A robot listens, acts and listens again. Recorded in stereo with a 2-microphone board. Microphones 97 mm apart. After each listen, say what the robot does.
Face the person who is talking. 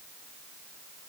Keep listening.
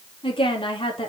Turn 65° left.
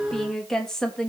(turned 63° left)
Found it: a woman speaking, straight ahead.